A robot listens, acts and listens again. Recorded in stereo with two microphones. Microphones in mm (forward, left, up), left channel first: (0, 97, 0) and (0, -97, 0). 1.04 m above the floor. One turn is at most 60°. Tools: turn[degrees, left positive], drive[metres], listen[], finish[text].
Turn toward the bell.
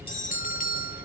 Thought: The bell: about 45° left or 135° left.
Action: turn[45]
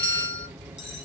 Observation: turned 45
Action: finish[Facing the bell, under 1 m away.]